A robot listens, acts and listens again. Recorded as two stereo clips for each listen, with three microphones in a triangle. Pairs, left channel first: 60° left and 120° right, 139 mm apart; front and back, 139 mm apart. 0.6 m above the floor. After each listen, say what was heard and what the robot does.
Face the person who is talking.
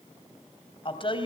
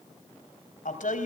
The woman speaking: 10° left. Turn 10° left.
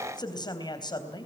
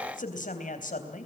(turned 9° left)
Found it: a woman speaking, straight ahead, 2 to 4 m away.